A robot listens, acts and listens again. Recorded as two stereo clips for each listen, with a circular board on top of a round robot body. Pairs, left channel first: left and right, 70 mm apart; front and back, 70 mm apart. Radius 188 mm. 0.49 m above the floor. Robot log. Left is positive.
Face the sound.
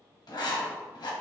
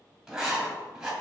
note: The writing: 95° left.
cmd yaw +95
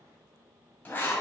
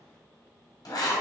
note: The writing is now 25° left.
cmd yaw +25
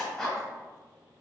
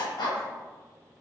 end: Found it: writing, straight ahead, 1 to 2 m away.